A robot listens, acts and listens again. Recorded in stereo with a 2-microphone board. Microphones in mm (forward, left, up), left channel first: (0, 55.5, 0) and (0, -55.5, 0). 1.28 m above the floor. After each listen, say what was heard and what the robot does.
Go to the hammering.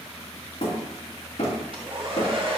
The hammering: about 65° left or 115° left. Turn 65° left.
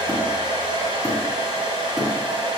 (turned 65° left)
Keep listening.
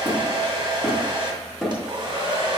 Drive 1.0 m forward.
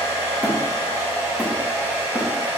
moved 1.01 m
Keep listening.
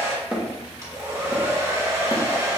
The hammering is now 10° right. Turn 10° right.
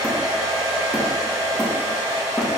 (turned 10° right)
Keep listening.
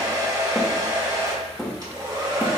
Drive 1.0 m forward.
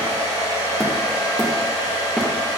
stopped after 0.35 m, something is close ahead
Keep listening.
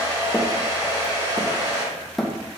Arrived at the hammering, straight ahead.